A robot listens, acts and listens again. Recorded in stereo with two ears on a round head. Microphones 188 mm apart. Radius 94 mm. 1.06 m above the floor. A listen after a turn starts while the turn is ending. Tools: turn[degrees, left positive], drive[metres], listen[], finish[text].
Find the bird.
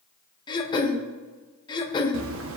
Thought: The bird: about 65° right or 115° right.
Action: turn[-65]
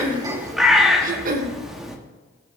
Action: finish[Found it: a bird, straight ahead.]